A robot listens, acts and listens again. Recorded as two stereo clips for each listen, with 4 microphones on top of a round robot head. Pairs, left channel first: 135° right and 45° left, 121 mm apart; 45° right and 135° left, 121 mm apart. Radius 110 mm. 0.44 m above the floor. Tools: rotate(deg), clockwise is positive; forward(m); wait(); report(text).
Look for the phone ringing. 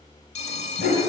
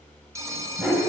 rotate(160)
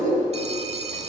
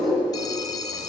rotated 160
rotate(-15)
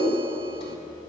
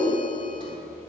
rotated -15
wait()
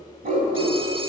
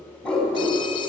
wait()
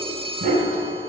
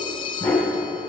report("Facing the phone ringing, under 1 m away.")